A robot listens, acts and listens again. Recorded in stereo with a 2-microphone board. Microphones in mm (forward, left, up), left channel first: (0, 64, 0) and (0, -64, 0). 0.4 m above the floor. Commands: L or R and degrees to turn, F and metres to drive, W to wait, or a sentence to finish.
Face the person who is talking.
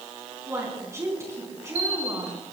R20
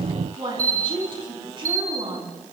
R140
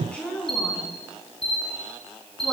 L10
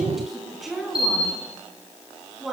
Facing the woman speaking, over 4 m away.